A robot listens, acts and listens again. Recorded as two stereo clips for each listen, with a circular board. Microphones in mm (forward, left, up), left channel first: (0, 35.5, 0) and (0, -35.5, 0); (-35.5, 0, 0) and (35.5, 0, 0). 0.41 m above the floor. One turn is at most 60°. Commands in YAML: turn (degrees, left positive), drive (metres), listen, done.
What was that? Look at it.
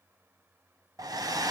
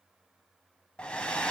turn: -60
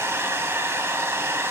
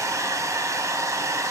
turn: -40
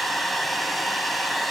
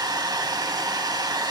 done: "Facing the hair dryer."